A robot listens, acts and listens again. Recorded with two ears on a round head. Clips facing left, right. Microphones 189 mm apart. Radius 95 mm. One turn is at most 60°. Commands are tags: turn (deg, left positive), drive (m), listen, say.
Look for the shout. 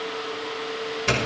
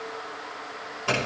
<listen/>
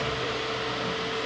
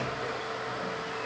<listen/>
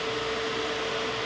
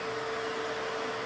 <say>I can't make out a shout, only a doorbell.</say>